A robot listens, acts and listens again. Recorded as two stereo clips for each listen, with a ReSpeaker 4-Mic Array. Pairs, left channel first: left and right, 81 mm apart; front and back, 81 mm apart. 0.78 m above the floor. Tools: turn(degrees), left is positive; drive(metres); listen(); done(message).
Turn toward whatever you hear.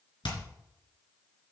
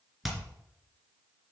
turn(degrees=90)
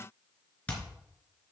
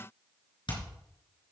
turn(degrees=15)
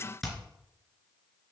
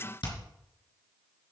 done("Found it: hammering, straight ahead, 2 to 4 m away.")